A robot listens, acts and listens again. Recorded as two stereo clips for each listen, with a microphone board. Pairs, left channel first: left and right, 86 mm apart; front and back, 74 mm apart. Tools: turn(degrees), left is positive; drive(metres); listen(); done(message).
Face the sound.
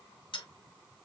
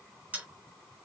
turn(degrees=110)
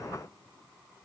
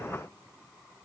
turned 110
done("I heard a dropped coin from this way, but can't make it out now.")